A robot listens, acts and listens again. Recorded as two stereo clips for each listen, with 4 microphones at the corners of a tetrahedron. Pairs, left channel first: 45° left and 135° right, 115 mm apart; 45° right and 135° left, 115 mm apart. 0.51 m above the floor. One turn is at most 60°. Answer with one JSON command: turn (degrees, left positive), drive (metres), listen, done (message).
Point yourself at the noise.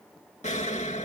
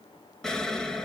{"turn": 40}
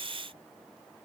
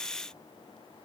{"done": "I heard an explosion from this way, but can't make it out now."}